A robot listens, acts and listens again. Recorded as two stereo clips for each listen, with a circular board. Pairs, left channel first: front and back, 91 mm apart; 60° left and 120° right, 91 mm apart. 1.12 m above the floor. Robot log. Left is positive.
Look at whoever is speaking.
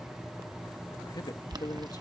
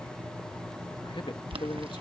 note: The man speaking: 40° left.
cmd yaw +40
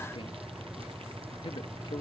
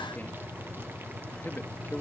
note: The man speaking is now 10° right.
cmd yaw -10
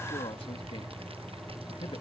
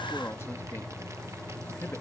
end: Found it: a man speaking, straight ahead.